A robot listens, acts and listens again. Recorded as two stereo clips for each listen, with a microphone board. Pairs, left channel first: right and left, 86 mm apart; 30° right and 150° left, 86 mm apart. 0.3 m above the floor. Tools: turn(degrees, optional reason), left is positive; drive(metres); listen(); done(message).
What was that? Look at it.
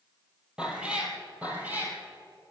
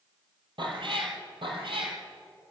turn(degrees=160, reason="The cat meowing: 160° left.")
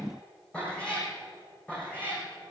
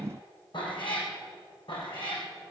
turn(degrees=-15, reason="The cat meowing is now 15° right.")
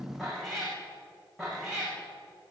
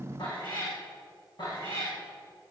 done("Found it: a cat meowing, straight ahead.")